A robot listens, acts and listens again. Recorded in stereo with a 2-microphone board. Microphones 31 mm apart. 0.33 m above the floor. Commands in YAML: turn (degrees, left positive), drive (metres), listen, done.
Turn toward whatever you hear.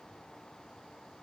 listen: true
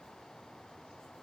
listen: true
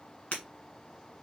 turn: 45
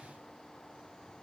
listen: true
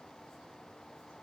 done: "I heard breaking glass, but can't make it out now. It was about straight ahead or 90° left."